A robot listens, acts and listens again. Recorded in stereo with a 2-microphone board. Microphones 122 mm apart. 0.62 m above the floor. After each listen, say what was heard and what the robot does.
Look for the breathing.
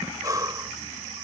The breathing: about 30° right or 150° right. Turn 30° right.
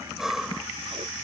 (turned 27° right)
Facing the breathing.